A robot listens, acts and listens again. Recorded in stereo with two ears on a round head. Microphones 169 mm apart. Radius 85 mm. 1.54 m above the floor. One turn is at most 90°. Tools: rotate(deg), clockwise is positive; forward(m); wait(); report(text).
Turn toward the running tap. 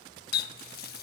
rotate(-50)
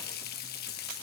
rotate(-65)
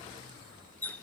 rotate(-10)
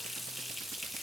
report("Facing the running tap.")